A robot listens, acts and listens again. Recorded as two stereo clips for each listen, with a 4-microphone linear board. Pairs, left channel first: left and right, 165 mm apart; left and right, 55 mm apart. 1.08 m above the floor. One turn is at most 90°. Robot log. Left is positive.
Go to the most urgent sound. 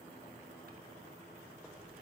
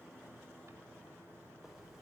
cmd idle
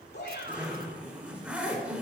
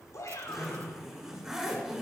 cmd yaw +90
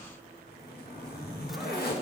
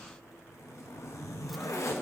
cmd idle
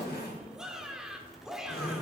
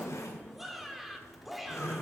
cmd fwd 1.0
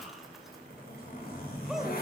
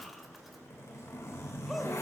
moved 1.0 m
cmd idle
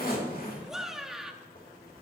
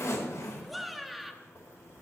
cmd fwd 1.0
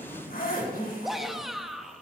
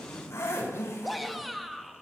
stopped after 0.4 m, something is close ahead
end: I am next to the shout.